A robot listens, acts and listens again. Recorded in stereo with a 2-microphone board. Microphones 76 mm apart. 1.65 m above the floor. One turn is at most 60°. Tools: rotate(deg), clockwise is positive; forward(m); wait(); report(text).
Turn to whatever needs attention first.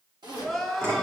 rotate(30)
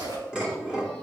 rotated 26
wait()
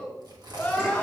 rotate(-20)
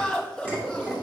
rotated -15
report("Found it: crying, straight ahead.")